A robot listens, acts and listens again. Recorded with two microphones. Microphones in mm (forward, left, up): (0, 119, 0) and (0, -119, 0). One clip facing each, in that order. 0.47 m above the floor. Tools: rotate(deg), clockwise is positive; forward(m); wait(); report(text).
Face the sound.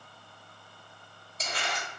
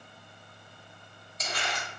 rotate(-30)
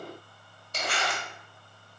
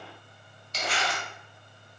rotate(-120)
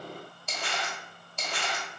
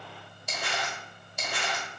rotate(10)
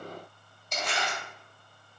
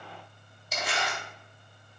report("Facing the crumpling, 1 to 2 m away.")